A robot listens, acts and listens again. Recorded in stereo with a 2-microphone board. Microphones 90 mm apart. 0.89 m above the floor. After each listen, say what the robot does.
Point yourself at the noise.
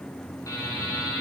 Turn 40° left.
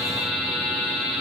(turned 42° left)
Facing the buzzer, over 4 m away.